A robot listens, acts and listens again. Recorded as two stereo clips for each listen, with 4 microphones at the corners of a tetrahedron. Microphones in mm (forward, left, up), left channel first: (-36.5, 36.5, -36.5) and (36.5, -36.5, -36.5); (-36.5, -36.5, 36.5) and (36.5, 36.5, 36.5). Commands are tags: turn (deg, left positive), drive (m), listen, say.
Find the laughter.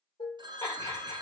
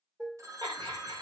<turn deg="85"/>
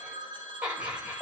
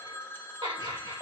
<turn deg="30"/>
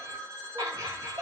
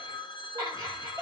<say>Found it: laughter, straight ahead, 2 to 4 m away.</say>